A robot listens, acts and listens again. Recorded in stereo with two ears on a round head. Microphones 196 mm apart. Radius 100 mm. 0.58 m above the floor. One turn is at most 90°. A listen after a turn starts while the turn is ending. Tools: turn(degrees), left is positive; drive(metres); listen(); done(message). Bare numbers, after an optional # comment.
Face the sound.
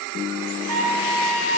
# The trumpet: about 65° right or 115° right.
turn(-65)
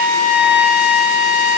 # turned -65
done("Facing the trumpet, 1 to 2 m away.")